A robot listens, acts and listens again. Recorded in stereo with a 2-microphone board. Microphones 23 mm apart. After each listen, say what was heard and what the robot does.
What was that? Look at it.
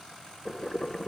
Turn 30° left.
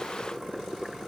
So it is at 15° right. Turn 15° right.
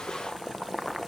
Facing the boiling.